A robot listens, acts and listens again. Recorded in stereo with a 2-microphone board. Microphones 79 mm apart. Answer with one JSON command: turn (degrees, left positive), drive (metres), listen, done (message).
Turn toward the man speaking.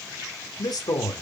{"turn": 65}
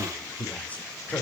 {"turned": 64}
{"turn": 20}
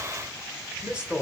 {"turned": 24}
{"turn": -15}
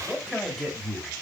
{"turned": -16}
{"done": "Facing the man speaking, 2 to 4 m away."}